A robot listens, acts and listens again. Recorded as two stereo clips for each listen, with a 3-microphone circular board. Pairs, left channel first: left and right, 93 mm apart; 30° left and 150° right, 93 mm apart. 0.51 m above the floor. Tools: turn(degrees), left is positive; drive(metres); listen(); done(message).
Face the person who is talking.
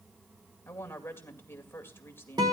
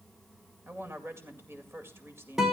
turn(degrees=150)
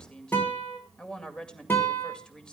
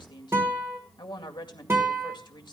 turn(degrees=10)
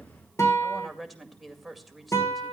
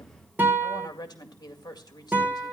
done("Found it: a woman speaking, straight ahead, 2 to 4 m away.")